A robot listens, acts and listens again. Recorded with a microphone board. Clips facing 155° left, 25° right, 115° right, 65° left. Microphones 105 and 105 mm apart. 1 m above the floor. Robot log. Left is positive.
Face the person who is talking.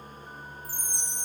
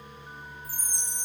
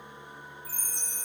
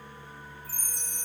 cmd idle
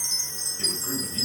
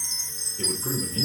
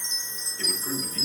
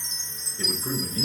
end: Found it: a man speaking, straight ahead, over 4 m away.